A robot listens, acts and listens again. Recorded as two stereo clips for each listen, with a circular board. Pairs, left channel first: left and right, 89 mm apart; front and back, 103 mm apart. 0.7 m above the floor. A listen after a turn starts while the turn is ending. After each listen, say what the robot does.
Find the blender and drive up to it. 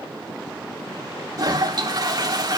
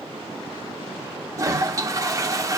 Keep listening.
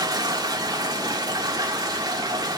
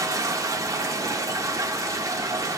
Keep listening.
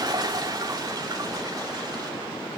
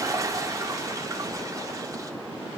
I can't make out a blender, only a toilet flushing.